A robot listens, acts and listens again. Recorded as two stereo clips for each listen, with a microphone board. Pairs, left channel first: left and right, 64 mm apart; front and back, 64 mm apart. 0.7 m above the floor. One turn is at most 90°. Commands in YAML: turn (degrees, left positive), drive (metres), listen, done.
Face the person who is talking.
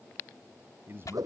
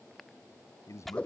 turn: -40
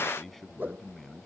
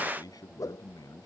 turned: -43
done: "Found it: a man speaking, straight ahead."